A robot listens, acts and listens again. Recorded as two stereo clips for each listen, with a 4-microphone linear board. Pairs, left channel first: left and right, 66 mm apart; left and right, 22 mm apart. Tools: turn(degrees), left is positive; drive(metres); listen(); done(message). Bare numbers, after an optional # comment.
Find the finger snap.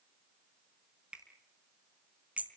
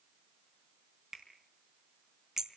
# The finger snap: about 15° right or 165° right.
turn(-15)
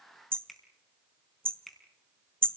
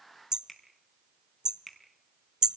done("Found it: a finger snap, straight ahead, over 4 m away.")